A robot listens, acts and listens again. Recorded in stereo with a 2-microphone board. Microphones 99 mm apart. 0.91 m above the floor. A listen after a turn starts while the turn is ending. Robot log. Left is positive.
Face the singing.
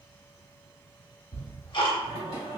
note: The singing: about 70° right or 110° right.
cmd yaw -70
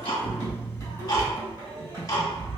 note: So it is at 45° right.
cmd yaw -45
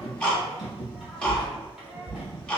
end: Facing the singing.